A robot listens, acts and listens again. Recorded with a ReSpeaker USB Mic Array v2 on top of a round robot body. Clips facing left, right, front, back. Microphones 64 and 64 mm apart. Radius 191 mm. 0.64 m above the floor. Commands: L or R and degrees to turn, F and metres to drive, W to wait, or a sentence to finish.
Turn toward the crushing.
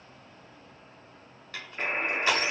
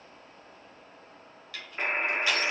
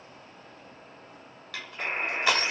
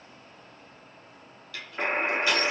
L30
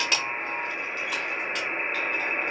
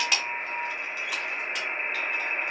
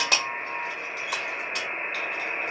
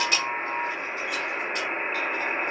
Facing the crushing.